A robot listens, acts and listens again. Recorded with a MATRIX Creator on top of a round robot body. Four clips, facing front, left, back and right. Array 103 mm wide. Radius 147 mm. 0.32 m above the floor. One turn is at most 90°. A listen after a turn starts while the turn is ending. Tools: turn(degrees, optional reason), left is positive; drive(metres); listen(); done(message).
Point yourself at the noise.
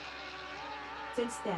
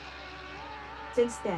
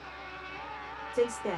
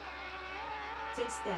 turn(degrees=90, reason="The woman speaking: 135° left.")
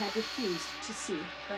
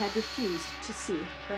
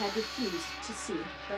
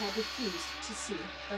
turn(degrees=90, reason="The woman speaking is now 90° left.")
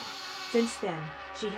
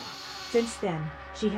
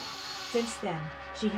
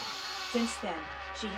turn(degrees=75, reason="The woman speaking is now 75° left.")
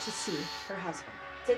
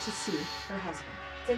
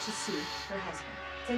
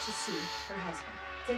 done("Facing the woman speaking.")